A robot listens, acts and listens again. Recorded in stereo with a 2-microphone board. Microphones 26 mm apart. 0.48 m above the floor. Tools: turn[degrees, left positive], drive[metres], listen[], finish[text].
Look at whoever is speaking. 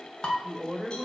Action: turn[-30]
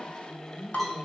Thought: So it is at 25° left.
Action: turn[25]
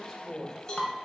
Thought: The woman speaking is now 15° left.
Action: turn[15]
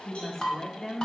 Thought: The woman speaking is now 25° left.
Action: turn[25]
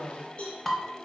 Thought: The woman speaking is now 20° left.
Action: turn[20]
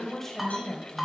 Thought: The woman speaking is now 15° left.
Action: turn[15]
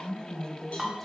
Action: finish[Facing the woman speaking, 1 to 2 m away.]